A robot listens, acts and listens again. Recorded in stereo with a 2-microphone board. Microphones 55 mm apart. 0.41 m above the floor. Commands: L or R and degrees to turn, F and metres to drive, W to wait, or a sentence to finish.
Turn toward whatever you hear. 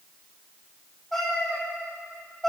L30
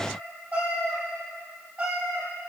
R25
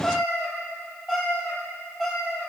Found it: a cat meowing, straight ahead.